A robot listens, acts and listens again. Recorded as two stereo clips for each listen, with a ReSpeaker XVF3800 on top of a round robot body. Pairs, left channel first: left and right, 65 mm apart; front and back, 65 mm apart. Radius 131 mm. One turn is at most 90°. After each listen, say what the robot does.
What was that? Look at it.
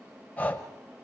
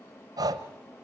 Turn 90° left.
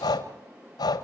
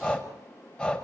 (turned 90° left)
Turn 75° left.
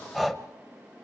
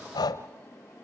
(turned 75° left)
Facing the breathing.